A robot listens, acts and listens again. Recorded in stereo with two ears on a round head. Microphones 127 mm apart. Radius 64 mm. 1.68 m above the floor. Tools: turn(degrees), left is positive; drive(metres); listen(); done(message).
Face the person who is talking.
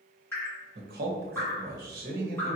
turn(degrees=-70)
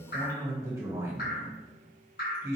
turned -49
turn(degrees=-20)
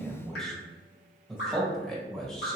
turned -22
done("Found it: a man speaking, straight ahead.")